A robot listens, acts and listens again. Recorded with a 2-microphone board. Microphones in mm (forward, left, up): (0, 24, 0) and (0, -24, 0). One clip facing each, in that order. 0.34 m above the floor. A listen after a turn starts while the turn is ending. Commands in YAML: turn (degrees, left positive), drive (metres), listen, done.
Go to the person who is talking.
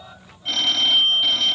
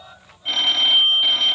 listen: true
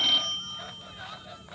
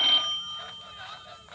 listen: true
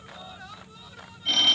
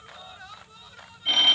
done: "I can't make out anyone speaking, only a phone ringing."